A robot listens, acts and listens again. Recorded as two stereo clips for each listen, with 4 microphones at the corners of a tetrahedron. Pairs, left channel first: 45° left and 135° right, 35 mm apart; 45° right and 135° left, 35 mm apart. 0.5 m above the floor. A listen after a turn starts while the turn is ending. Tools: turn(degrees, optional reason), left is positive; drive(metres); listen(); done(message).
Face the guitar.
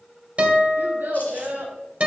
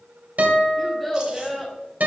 turn(degrees=170, reason="The guitar: 170° left.")
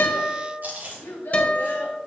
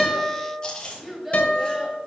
done("Found it: a guitar, straight ahead.")